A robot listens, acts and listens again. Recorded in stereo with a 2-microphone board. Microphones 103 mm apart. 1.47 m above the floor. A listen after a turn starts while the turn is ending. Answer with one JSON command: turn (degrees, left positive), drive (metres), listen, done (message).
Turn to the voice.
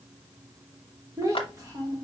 {"turn": -35}
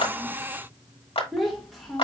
{"done": "Found it: a child speaking, straight ahead, 1 to 2 m away."}